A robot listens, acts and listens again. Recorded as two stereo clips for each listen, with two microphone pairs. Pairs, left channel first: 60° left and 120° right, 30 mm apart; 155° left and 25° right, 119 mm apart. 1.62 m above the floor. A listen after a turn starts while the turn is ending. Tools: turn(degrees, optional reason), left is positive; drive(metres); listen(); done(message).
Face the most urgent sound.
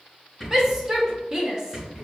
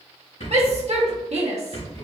turn(degrees=-50, reason="The shout: 50° right.")
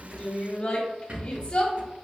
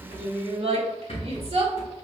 done("Found it: a shout, straight ahead, under 1 m away.")